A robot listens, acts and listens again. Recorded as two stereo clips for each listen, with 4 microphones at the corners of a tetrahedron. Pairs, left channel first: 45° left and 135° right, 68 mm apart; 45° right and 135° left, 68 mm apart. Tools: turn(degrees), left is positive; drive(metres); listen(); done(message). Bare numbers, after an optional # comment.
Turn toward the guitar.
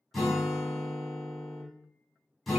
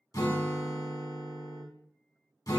# The guitar: 45° right.
turn(-45)
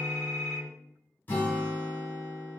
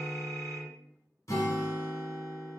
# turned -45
# The guitar is now 15° right.
turn(-15)
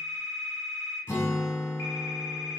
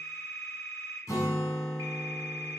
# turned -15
done("Facing the guitar.")